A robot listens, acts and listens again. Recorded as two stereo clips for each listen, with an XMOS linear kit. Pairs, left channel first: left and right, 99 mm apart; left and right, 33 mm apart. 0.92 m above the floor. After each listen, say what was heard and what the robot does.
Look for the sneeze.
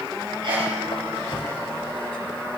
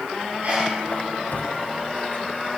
The sneeze: about 65° right or 115° right. Turn 65° right.
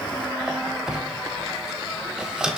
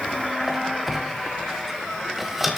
Keep listening.
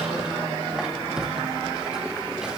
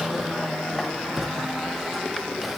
I heard a sneeze, but can't make it out now. It was about straight ahead or 50° right.